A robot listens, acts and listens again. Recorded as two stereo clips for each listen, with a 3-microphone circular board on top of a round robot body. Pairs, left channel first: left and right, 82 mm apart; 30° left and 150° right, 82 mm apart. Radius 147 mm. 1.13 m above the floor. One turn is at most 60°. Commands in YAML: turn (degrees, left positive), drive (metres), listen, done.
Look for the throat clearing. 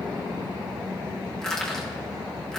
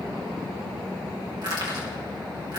listen: true
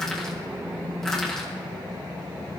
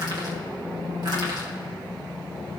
listen: true
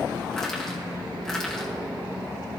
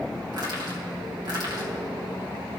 done: "I can't make out throat clearing to turn to."